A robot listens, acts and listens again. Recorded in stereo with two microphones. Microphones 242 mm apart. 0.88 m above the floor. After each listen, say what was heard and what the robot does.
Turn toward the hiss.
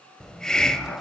Turn 30° left.
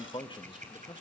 Keep listening.
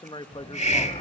So it is at 145° left. Turn 145° left.
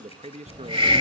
The hiss is now 25° right. Turn 25° right.
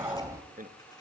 The hiss is now 15° right. Turn 15° right.
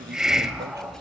Facing the hiss, 1 to 2 m away.